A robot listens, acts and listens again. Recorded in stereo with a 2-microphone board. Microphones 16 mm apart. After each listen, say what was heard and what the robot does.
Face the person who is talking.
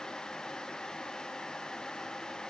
Keep listening.
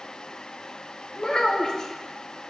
The child speaking: about 50° left or 130° left. Turn 50° left.
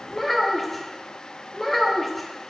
So it is at 15° left. Turn 15° left.
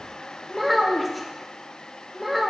Facing the child speaking.